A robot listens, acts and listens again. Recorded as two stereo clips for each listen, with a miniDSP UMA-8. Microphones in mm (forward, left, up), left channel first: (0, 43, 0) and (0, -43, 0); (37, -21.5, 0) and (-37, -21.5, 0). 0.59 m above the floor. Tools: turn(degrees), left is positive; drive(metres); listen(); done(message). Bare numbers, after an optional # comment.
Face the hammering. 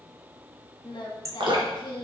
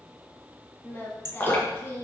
# The hammering: 145° right.
turn(-145)
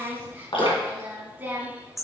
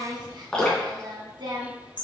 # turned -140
done("Found it: hammering, straight ahead.")